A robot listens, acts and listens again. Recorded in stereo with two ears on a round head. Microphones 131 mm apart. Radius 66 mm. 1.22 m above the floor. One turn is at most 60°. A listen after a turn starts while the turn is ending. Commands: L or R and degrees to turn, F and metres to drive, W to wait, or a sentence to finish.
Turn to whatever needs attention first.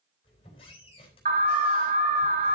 R50
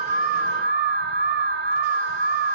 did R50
R60
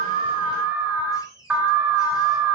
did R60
R10
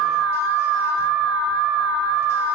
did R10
Found it: an alarm, straight ahead.